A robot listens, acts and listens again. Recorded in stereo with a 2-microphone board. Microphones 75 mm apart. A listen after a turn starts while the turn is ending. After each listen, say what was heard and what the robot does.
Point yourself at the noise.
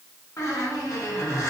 The squeak: about 40° left or 140° left. Turn 40° left.
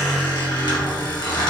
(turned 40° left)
So it is at 100° left. Turn 100° left.
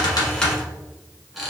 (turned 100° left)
Facing the squeak, 1 to 2 m away.